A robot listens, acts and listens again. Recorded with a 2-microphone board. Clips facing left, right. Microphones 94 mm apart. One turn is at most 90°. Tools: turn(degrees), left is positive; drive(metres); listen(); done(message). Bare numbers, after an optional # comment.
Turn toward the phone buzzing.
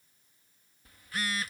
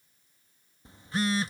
# The phone buzzing: about 25° right or 155° right.
turn(-25)
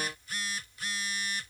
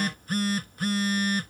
# So it is at 130° right.
turn(-90)
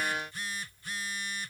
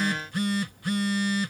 # The phone buzzing is now 65° right.
turn(-65)
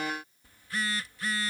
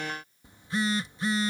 # The phone buzzing is now 20° right.
turn(-20)
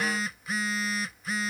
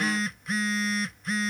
done("Facing the phone buzzing.")